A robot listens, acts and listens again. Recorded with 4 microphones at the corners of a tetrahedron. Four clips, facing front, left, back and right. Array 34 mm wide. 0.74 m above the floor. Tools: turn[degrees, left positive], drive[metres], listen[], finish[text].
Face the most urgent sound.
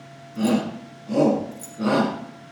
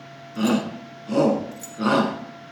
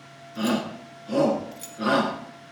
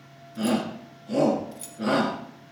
Thought: The shout: 105° left.
Action: turn[105]
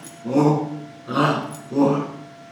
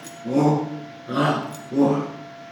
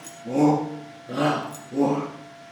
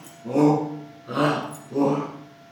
Thought: The shout is now 15° right.
Action: turn[-15]
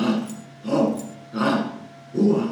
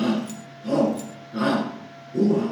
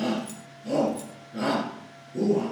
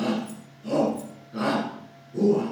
Action: finish[Found it: a shout, straight ahead.]